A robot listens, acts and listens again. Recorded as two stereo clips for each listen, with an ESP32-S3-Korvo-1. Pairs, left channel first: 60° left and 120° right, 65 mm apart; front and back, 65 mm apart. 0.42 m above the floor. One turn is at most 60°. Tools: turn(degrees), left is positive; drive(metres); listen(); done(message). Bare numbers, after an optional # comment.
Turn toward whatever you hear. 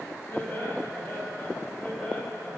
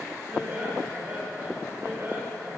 # The laughter: 130° left.
turn(60)
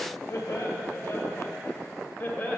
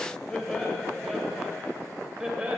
# The laughter is now 110° left.
turn(60)
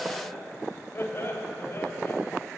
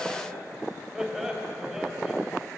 # The laughter is now 95° left.
turn(60)
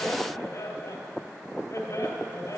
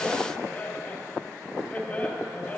# The laughter is now 60° left.
turn(60)
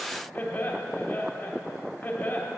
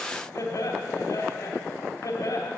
done("Facing the laughter.")